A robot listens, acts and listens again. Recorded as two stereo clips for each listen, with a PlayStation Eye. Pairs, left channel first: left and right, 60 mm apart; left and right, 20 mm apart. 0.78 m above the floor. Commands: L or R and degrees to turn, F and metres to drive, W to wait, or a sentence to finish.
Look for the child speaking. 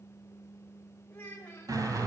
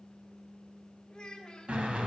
L30
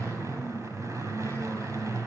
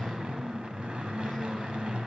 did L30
W
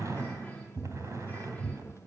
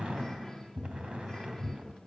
W
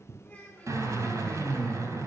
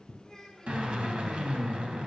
L20
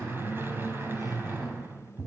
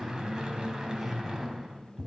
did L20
W
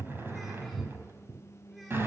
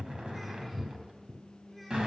W
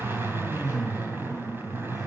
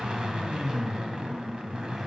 Facing where the child speaking came from. I can't hear it now.